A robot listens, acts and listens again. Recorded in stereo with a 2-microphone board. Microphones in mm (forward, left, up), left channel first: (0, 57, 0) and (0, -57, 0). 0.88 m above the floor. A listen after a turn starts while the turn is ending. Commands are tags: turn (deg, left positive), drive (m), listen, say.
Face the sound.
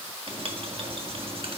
<turn deg="-50"/>
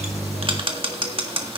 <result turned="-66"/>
<turn deg="-55"/>
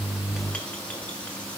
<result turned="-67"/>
<turn deg="10"/>
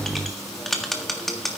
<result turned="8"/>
<say>Facing the writing.</say>